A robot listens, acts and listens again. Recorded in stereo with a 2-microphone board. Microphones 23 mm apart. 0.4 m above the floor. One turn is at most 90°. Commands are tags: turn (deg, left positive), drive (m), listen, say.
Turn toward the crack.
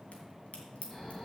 <turn deg="60"/>
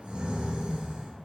<listen/>
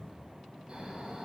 <say>I heard a crack, but can't make it out now. It was about straight ahead or 60° left.</say>